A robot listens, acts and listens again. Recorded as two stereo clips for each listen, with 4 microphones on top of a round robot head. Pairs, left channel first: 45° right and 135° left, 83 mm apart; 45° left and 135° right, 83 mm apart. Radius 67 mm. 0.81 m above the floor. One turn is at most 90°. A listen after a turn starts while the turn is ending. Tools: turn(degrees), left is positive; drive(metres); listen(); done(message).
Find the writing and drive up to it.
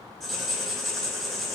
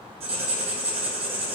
turn(degrees=-90)
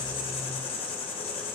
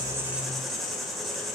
turn(degrees=-45)
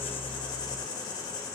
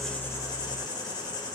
drive(metres=1.0)
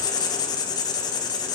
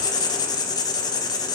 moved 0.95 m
drive(metres=1.0)
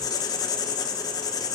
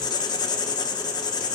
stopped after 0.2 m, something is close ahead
done("Arrived at the writing, straight ahead.")